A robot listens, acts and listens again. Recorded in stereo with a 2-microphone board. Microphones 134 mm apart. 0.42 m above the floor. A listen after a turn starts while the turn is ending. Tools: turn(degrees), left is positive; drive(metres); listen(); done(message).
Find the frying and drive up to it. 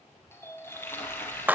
turn(degrees=15)
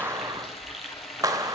drive(metres=1.0)
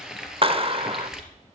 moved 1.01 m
drive(metres=1.0)
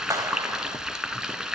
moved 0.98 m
drive(metres=1.0)
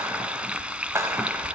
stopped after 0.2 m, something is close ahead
turn(degrees=-10)
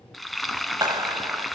done("I am next to the frying.")